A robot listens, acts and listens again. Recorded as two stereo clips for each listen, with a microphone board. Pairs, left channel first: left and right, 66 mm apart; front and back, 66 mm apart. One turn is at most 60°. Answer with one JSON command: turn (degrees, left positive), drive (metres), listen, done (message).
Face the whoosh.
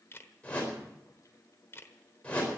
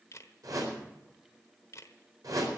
{"turn": 60}
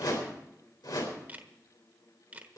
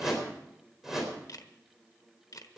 {"turn": 60}
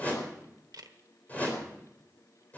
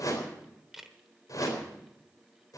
{"turn": 25}
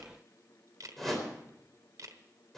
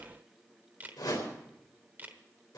{"done": "Found it: a whoosh, straight ahead."}